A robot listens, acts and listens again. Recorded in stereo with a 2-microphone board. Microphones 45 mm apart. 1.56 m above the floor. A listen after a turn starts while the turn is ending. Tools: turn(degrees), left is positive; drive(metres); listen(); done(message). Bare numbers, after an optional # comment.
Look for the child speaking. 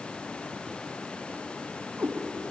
listen()
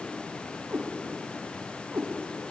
listen()
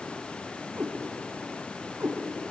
done("I can't make out a child speaking, only a cat meowing.")